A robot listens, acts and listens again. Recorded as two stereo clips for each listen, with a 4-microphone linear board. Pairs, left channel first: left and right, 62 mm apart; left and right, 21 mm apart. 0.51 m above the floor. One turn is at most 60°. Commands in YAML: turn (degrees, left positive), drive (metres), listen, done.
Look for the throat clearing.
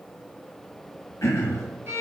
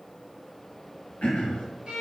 turn: 50
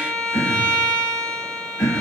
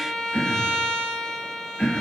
turn: 60
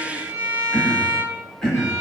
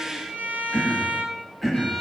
turn: 10
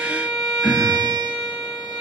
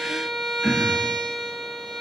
done: "Found it: throat clearing, straight ahead, 1 to 2 m away."